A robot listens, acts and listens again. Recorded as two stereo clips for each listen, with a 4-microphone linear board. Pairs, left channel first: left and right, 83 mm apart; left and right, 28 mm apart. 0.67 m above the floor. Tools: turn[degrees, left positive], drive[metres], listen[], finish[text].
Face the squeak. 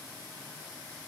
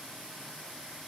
Action: listen[]
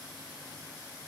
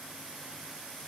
Action: listen[]
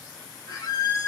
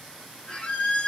Thought: The squeak: about 35° left or 145° left.
Action: turn[35]
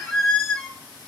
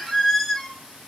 Action: finish[Facing the squeak.]